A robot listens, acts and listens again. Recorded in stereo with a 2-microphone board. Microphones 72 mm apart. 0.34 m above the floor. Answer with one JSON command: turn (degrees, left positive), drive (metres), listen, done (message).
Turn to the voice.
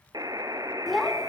{"turn": 30}
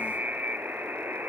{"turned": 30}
{"listen": true}
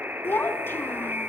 {"turn": 150}
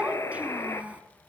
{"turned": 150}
{"turn": -20}
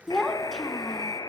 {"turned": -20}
{"done": "Found it: a child speaking, straight ahead."}